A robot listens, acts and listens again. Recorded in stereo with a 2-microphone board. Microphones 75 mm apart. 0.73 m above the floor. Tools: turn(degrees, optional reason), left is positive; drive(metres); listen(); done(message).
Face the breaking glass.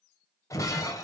turn(degrees=45, reason="The breaking glass: about 45° left or 135° left.")
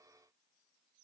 listen()
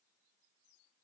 done("I heard breaking glass, but can't make it out now. It was about straight ahead or 90° left.")